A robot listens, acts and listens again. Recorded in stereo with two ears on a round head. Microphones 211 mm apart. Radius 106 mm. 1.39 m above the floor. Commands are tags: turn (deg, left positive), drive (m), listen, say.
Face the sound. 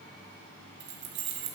<turn deg="-55"/>
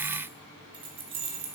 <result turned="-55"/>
<turn deg="-25"/>
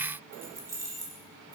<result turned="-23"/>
<turn deg="-15"/>
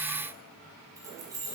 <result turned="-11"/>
<turn deg="-15"/>
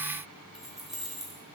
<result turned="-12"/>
<say>Found it: keys jangling, straight ahead, 2 to 4 m away.</say>